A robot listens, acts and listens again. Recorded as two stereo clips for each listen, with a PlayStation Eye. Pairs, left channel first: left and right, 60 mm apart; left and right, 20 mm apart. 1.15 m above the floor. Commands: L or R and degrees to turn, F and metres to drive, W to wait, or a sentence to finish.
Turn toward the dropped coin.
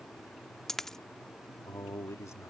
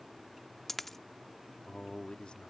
L30
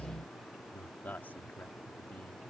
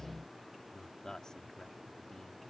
W
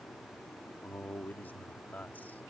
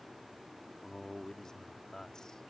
I heard a dropped coin, but can't make it out now. It was about 25° right or 145° left.